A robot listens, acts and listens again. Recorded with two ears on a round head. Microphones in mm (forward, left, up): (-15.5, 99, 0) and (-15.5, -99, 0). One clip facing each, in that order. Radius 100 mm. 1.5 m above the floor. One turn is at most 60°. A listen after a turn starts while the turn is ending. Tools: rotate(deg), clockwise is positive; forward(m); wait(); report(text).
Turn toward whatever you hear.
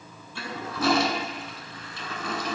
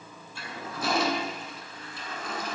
rotate(-55)
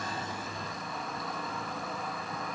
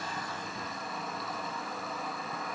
report("Found it: a toilet flushing, straight ahead.")